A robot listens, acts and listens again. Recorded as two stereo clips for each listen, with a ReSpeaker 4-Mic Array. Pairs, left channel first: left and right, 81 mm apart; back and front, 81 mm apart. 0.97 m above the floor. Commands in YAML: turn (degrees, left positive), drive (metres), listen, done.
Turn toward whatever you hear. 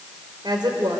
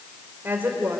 turn: -65
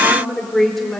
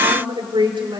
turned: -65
done: "Facing the woman speaking."